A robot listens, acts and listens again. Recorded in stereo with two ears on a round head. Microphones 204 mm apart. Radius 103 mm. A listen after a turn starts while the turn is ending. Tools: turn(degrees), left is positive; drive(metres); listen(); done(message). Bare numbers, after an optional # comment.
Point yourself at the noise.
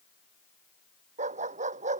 # The dog barking: about 35° right or 145° right.
turn(-35)
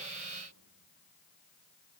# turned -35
listen()
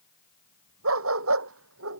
# So it is at 110° right.
turn(-110)
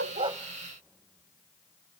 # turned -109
listen()
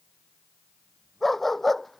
done("Found it: a dog barking, straight ahead.")